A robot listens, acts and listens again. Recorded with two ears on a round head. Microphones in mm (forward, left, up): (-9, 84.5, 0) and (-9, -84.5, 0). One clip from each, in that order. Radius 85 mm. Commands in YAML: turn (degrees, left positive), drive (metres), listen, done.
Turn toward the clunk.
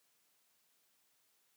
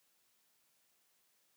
listen: true
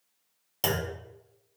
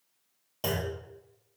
turn: 50
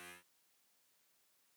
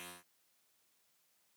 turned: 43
listen: true
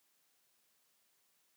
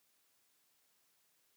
done: "I heard a clunk, but can't make it out now. It was about 5° left or 90° left."